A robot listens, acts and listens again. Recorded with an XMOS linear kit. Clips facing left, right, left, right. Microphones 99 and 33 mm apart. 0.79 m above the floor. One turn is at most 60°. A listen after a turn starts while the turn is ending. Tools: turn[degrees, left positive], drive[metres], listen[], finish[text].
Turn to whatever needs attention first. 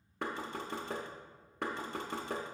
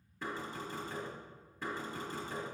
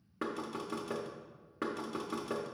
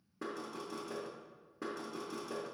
Action: listen[]
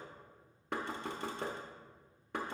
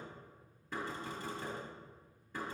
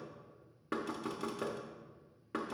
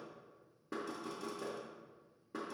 Action: listen[]
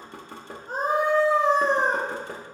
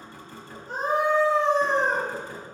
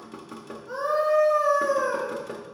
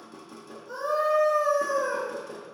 Thought: The scream: about 45° left or 135° left.
Action: turn[45]
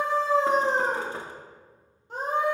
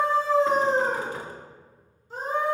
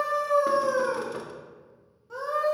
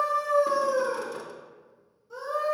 Thought: So it is at 80° left.
Action: turn[60]
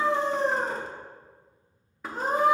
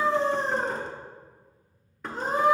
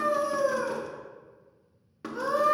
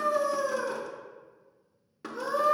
Thought: The scream is now 55° left.
Action: turn[55]
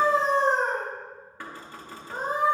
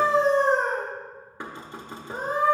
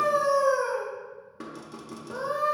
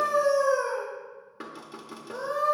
Thought: The scream is now 30° left.
Action: turn[30]
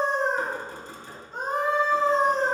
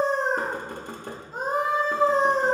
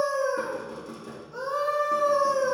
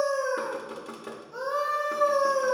Thought: The scream is now 10° right.
Action: turn[-10]
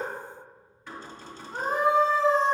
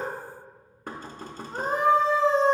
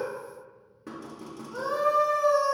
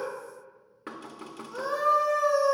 Action: finish[Facing the scream.]